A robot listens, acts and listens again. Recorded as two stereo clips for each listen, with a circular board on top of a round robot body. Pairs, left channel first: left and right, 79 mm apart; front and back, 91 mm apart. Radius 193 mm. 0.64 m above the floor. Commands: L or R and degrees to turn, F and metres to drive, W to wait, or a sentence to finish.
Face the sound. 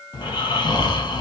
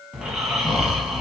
L95
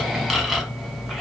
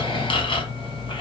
Facing the snoring, 1 to 2 m away.